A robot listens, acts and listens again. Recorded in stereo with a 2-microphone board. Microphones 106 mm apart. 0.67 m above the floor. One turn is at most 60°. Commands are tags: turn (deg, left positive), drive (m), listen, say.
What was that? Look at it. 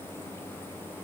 <listen/>
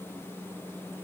<listen/>
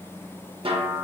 <turn deg="-55"/>
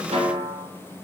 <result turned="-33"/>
<turn deg="-60"/>
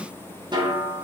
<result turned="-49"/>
<turn deg="-45"/>
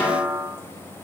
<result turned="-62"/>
<turn deg="20"/>
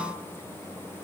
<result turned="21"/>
<listen/>
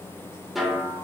<say>Facing the snare drum.</say>